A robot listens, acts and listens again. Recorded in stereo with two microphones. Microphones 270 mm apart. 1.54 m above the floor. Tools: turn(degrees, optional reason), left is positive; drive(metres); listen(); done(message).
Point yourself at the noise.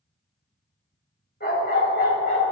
turn(degrees=35, reason="The dog barking: about 35° left or 145° left.")
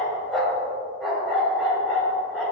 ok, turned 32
done("Found it: a dog barking, straight ahead, over 4 m away.")